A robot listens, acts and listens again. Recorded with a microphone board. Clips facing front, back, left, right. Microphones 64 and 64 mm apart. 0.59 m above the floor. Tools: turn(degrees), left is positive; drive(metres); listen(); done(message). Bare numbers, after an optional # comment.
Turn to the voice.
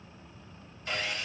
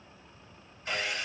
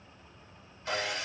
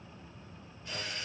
listen()
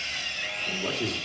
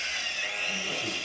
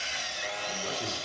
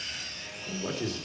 # The man speaking: 25° right.
turn(-25)
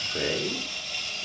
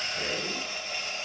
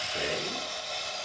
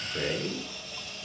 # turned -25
done("Facing the man speaking, 2 to 4 m away.")